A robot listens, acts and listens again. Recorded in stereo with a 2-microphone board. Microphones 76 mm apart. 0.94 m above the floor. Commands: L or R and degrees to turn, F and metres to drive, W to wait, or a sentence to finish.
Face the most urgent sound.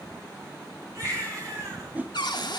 R40
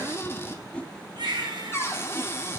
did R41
R95
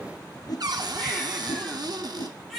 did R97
Facing the baby crying.